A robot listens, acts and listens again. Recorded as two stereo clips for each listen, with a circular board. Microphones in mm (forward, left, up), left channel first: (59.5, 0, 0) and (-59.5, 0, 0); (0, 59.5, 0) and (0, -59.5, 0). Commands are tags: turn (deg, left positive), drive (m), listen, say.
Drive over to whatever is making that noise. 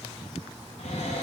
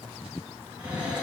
<turn deg="-15"/>
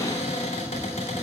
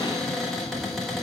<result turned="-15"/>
<drive m="1.0"/>
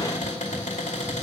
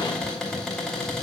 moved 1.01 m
<drive m="1.0"/>
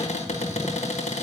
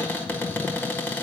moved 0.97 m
<turn deg="15"/>
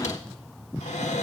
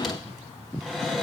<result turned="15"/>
<drive m="1.0"/>
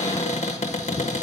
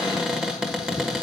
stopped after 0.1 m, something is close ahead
<say>I am next to the cupboard door.</say>